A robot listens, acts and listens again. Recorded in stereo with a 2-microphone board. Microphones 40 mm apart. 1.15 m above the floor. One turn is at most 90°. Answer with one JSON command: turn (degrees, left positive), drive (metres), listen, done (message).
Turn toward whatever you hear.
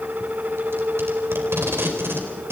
{"turn": -90}
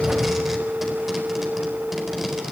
{"done": "Found it: tape being pulled, straight ahead."}